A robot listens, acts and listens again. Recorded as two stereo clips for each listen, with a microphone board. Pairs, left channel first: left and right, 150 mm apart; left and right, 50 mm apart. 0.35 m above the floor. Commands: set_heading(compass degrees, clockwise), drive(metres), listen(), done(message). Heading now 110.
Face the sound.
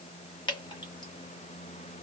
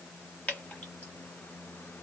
set_heading(80)
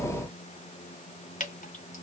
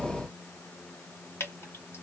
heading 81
set_heading(321)
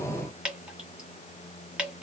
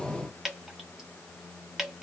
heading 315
done("Facing the dripping, 1 to 2 m away.")